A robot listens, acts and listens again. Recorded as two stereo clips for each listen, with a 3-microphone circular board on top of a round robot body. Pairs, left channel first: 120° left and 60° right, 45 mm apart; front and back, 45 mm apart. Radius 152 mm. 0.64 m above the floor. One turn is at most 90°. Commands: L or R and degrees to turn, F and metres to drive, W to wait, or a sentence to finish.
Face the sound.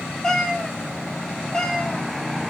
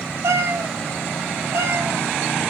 R90
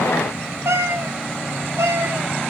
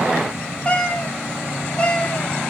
R65
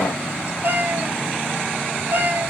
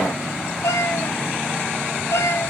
R15
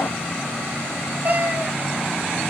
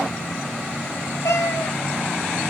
Facing the cat meowing, 2 to 4 m away.